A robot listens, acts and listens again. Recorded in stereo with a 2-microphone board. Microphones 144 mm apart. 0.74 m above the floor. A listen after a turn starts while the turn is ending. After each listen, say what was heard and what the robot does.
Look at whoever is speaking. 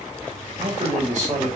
The man speaking: about 55° right or 125° right. Turn 55° right.
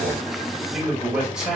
Facing the man speaking.